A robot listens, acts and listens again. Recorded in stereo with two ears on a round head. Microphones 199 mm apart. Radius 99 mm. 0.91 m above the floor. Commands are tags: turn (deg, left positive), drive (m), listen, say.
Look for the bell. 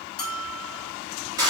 <turn deg="20"/>
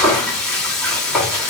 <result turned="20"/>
<listen/>
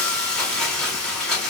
<listen/>
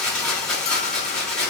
<say>I heard a bell, but can't make it out now. It was about straight ahead or 140° left.</say>